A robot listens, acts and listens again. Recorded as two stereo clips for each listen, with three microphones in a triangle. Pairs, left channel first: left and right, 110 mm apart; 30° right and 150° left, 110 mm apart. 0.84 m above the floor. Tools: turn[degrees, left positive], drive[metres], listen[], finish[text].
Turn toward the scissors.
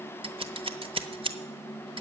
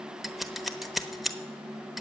Thought: The scissors: 120° right.
Action: turn[-120]
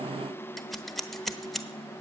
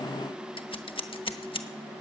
Action: finish[Facing the scissors.]